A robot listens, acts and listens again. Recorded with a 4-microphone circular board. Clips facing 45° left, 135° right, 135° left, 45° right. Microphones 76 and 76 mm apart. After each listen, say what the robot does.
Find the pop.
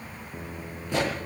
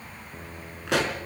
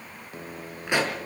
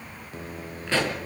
Turn 150° right.
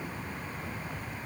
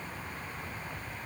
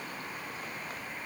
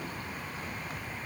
I heard a pop from this way, but can't make it out now.